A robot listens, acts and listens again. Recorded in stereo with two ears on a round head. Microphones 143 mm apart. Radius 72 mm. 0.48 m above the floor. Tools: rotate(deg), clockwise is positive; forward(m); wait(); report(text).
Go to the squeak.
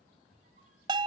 rotate(45)
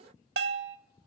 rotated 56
wait()
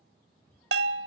rotate(-10)
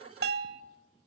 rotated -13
wait()
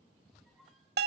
forward(1.0)
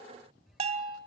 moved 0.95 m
forward(1.0)
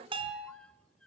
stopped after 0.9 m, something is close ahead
report("I am next to the squeak.")